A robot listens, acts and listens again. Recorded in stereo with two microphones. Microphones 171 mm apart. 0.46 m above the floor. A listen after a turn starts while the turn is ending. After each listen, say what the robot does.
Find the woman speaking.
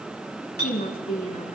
Turn 45° left.
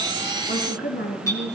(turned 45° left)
Turn 90° left.
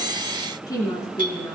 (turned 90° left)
Turn 20° left.
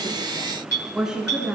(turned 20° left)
Found it: a woman speaking, straight ahead, over 4 m away.